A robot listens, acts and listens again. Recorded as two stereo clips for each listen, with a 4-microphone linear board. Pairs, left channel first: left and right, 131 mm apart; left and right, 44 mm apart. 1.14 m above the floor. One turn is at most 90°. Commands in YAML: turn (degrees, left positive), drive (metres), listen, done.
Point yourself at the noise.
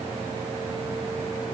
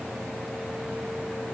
listen: true
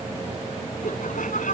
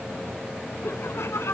turn: 90
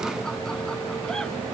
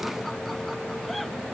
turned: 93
listen: true
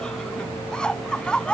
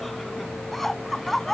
done: "Found it: laughter, straight ahead."